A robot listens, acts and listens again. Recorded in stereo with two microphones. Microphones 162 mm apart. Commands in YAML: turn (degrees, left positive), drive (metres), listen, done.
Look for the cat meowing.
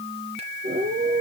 turn: -65
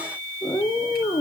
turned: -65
turn: 20
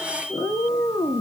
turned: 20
turn: 15
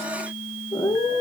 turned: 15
turn: 20
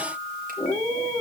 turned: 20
turn: 15
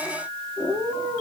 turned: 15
done: "Found it: a cat meowing, straight ahead."